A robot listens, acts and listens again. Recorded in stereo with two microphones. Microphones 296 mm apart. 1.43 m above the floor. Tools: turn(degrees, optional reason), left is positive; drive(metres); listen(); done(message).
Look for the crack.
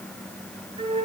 listen()
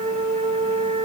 listen()
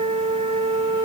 done("I can't make out a crack to turn to.")